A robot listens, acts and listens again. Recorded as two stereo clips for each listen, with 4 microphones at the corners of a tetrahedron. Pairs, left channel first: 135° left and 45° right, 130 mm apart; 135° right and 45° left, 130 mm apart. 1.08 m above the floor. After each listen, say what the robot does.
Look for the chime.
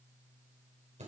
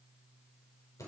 Keep listening.
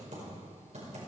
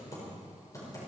Keep listening.
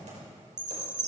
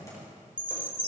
Turn 30° right.
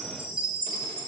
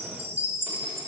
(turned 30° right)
Found it: a chime, straight ahead.